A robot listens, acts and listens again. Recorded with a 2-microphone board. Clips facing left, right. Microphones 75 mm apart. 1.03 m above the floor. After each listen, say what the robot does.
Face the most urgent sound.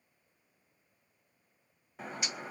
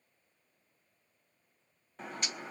Keep listening.
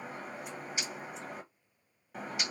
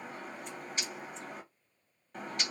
Keep listening.
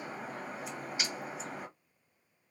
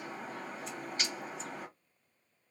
I can't make out anything urgent to turn to.